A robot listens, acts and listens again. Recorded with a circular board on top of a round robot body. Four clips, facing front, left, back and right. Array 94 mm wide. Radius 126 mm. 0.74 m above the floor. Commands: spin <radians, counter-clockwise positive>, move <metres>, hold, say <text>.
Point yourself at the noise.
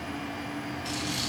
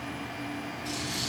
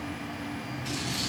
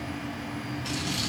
spin -1.22
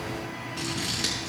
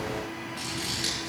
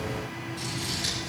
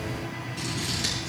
say Facing the scissors, over 4 m away.